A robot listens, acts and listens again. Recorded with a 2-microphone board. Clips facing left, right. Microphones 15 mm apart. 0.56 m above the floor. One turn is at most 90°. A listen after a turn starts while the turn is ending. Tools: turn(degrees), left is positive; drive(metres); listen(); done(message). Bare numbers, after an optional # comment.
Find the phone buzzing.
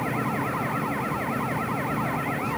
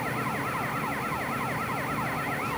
listen()
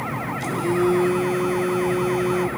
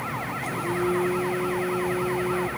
turn(90)
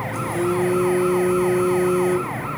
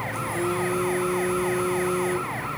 # So it is at 20° right.
turn(-20)
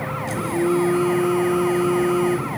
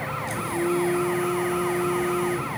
done("Facing the phone buzzing, 2 to 4 m away.")